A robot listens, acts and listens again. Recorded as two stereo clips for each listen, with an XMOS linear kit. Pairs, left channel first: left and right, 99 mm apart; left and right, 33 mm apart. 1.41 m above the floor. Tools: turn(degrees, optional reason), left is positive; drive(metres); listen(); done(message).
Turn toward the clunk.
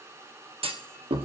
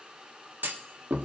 turn(degrees=-90)
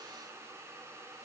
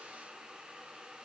done("Facing where the clunk came from. I can't hear it now.")